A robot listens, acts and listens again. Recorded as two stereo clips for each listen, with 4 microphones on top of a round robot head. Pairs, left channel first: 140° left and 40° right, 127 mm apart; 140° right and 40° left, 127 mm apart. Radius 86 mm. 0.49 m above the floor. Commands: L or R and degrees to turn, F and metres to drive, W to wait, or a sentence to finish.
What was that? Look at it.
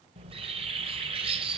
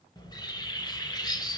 R85
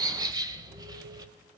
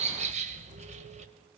L15
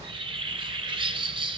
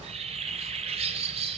Found it: a bird, straight ahead.